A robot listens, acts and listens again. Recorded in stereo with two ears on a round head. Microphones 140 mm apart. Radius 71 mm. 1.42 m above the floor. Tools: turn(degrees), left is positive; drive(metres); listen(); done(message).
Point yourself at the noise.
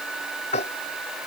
turn(degrees=40)
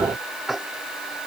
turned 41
done("Found it: tapping, straight ahead.")